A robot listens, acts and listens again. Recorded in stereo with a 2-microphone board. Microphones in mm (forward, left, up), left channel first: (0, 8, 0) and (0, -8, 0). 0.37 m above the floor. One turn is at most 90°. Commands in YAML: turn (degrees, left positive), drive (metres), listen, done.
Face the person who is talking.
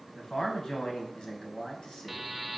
turn: 65
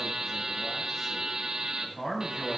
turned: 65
turn: 35
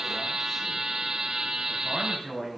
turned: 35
done: "Found it: a man speaking, straight ahead."